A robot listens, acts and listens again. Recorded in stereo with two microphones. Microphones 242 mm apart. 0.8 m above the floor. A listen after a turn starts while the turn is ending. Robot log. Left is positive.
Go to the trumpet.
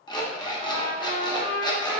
note: The trumpet: about 70° left or 110° left.
cmd yaw +70
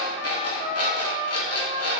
note: So it is at 25° left.
cmd yaw +25
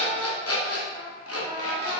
cmd idle
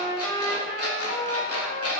note: The trumpet is now 15° left.
cmd yaw +15
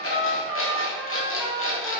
cmd fwd 1.0
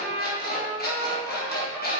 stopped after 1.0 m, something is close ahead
end: I am next to the trumpet.